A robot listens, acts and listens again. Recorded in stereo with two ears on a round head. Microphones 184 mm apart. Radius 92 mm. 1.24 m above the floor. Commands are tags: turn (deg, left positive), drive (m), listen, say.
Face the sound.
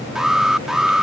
<turn deg="30"/>
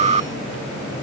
<turn deg="-30"/>
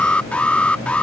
<say>Found it: an alarm, straight ahead.</say>